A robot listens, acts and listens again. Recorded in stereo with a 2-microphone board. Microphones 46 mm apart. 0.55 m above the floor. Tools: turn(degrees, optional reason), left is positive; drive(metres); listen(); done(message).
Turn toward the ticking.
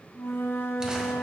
listen()
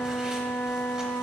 listen()
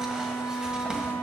done("I can't make out ticking to turn to.")